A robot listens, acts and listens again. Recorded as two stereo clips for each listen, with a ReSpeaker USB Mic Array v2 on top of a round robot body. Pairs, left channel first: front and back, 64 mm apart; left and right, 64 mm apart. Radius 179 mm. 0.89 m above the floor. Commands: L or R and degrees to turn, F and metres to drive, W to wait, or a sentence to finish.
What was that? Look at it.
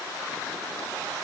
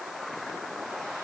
W
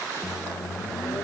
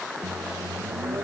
R40
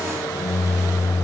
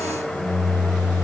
L25
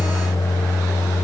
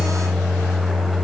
Found it: a microwave, straight ahead, under 1 m away.